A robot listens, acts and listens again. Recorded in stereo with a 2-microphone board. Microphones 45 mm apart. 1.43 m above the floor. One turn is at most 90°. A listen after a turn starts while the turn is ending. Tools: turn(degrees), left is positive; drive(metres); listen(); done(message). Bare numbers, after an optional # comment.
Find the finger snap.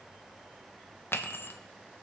# The finger snap: about 60° left or 120° left.
turn(60)
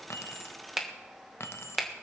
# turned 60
done("Found it: a finger snap, straight ahead, 1 to 2 m away.")